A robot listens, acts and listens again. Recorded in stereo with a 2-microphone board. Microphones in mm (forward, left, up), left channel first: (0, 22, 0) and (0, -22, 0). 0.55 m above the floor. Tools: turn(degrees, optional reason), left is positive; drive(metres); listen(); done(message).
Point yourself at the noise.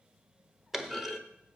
turn(degrees=-30)
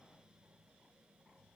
listen()
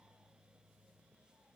done("I heard a clunk, but can't make it out now. It was about 25° left or 145° right.")